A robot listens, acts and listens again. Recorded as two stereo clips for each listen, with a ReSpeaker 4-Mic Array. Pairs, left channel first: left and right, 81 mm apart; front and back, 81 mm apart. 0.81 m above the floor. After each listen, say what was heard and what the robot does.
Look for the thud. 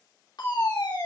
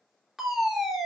Keep listening.
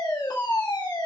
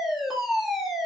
Keep listening.
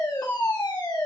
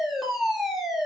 I can't make out a thud, only a fire alarm.